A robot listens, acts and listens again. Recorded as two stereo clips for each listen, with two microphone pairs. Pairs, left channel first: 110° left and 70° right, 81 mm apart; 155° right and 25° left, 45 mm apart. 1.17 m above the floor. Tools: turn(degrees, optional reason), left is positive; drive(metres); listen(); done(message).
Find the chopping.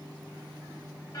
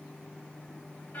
listen()
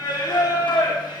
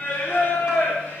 listen()
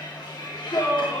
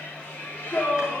done("I can't make out chopping to turn to.")